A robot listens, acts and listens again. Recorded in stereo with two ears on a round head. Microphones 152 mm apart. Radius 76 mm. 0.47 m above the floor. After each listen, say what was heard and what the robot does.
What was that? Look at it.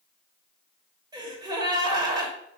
The gasp: about 25° right or 155° right. Turn 25° right.
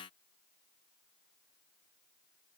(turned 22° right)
Keep listening.
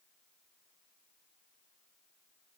I heard a gasp, but can't make it out now. It was about straight ahead or 135° right.